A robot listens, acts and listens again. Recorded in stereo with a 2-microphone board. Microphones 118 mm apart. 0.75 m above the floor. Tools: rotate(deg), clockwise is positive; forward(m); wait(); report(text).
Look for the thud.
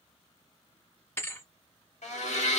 rotate(-20)
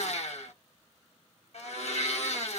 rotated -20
wait()
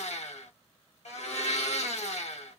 report("I heard a thud, but can't make it out now. It was about straight ahead or 140° left.")